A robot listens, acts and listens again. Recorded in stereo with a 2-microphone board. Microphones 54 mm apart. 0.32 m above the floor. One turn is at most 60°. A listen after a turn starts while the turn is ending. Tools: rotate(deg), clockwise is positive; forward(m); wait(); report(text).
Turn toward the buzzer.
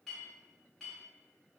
wait()
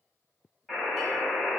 rotate(-30)
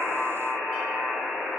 rotate(35)
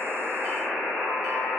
rotate(-10)
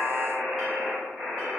report("Facing the buzzer, 1 to 2 m away.")